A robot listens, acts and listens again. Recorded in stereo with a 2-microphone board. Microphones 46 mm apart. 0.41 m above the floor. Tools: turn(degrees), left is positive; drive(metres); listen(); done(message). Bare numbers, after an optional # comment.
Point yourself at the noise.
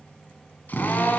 # The drill: about 40° left or 140° left.
turn(40)
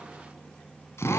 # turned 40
# So it is at 100° left.
turn(100)
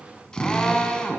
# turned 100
# The drill is now 15° left.
turn(15)
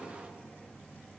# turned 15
listen()
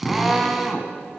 done("Found it: a drill, straight ahead.")